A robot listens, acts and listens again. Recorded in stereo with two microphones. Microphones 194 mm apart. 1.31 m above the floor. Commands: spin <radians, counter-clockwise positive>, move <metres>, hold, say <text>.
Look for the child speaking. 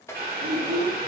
spin -0.96
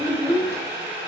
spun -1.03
spin -0.35
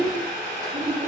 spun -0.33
spin -0.70
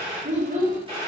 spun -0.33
spin -0.79
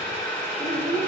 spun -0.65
spin -0.35
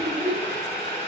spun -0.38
say Facing the child speaking.